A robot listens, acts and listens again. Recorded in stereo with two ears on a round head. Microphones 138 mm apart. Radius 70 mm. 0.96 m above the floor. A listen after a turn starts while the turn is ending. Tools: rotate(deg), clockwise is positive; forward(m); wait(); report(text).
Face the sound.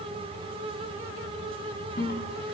rotate(-65)
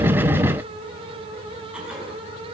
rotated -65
wait()
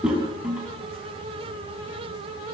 report("Facing the toilet flushing.")